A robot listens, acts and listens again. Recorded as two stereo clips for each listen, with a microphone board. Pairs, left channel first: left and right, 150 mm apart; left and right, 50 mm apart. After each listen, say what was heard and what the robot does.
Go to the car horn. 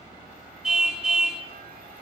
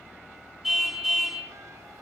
Turn 30° right.
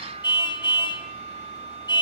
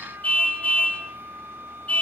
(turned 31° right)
So it is at 30° left. Turn 30° left.
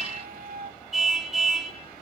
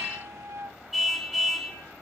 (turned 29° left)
Drive 1.0 m forward.
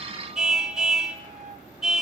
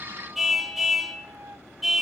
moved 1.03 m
Drive 1.0 m forward.
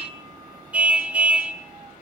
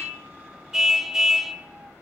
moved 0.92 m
The car horn is now 10° right. Turn 10° right.
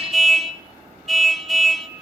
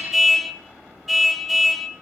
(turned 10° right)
Drive 1.0 m forward.
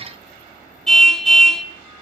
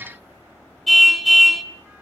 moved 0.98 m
Drive 1.0 m forward.
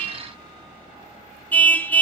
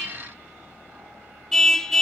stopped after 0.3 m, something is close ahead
The car horn is now 15° left. Turn 15° left.
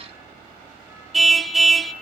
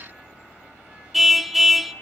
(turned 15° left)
Arrived at the car horn, straight ahead.